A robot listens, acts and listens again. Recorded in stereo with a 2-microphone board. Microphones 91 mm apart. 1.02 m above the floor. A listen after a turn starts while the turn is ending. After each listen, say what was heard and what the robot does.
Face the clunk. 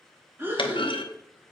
The clunk: about 65° left or 115° left. Turn 65° left.
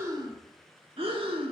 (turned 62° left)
Keep listening.
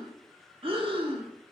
I heard a clunk, but can't make it out now. It was about straight ahead or 55° left.